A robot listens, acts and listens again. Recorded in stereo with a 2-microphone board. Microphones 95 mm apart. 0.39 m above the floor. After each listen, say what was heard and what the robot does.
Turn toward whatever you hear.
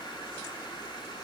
Keep listening.
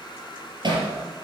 The hammering: about 50° right or 130° right. Turn 50° right.
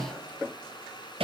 So it is at 80° right. Turn 80° right.
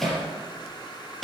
Found it: hammering, straight ahead, over 4 m away.